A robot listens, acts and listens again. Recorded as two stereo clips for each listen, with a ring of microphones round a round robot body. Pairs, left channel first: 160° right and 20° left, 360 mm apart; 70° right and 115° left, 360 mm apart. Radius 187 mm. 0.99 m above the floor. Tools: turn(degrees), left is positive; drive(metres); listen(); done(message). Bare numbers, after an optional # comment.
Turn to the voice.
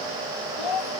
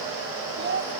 # The child speaking: 175° left.
turn(175)
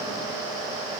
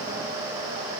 listen()
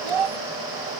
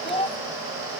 # The child speaking is now 10° left.
turn(10)
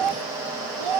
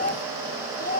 done("Facing the child speaking.")